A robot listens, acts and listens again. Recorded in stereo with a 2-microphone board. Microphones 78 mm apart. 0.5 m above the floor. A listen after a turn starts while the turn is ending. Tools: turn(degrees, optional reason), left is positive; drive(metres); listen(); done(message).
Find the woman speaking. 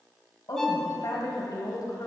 turn(degrees=60, reason="The woman speaking: about 60° left or 120° left.")
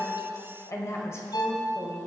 turn(degrees=35, reason="So it is at 35° left.")
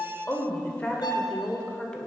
turn(degrees=10, reason="The woman speaking is now 10° left.")
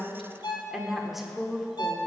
done("Found it: a woman speaking, straight ahead.")